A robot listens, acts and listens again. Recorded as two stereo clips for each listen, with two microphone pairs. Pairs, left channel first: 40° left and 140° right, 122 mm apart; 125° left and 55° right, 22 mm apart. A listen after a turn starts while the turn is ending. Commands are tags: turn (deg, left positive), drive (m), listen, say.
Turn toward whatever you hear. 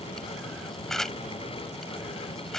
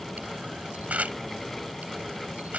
<turn deg="-50"/>
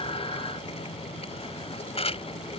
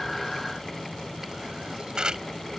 <say>Found it: a camera shutter, straight ahead.</say>